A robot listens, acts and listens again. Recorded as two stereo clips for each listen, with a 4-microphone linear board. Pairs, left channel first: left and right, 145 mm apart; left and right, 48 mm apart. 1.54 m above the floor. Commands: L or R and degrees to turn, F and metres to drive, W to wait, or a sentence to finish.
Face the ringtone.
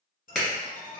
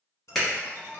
L65
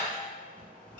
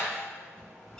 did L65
L10
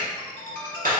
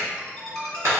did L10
Facing the ringtone.